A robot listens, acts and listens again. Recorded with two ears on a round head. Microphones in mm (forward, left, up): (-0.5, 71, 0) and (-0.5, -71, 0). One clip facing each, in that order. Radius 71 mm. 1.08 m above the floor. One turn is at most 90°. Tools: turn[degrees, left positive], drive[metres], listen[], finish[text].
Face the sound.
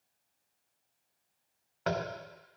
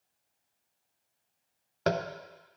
Thought: The tapping: about 50° right or 130° right.
Action: turn[-50]
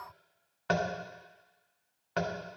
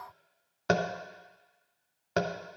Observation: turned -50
Thought: So it is at 70° right.
Action: turn[-70]
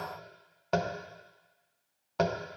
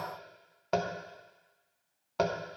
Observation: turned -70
Action: finish[Facing the tapping.]